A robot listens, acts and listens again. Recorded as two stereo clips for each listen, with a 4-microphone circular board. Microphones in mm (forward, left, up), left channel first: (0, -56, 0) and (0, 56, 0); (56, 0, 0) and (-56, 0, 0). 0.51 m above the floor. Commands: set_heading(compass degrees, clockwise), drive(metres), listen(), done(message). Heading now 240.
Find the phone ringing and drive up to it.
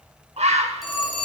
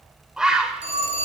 set_heading(60)
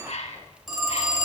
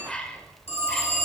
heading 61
drive(1.0)
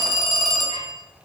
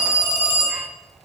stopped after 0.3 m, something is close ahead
done("Blocked. The phone ringing is further on, straight ahead.")